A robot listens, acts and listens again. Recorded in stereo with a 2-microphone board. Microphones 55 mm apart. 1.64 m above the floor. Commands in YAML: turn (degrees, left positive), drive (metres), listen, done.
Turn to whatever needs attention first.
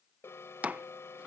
turn: 45
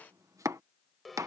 done: "Facing the alarm."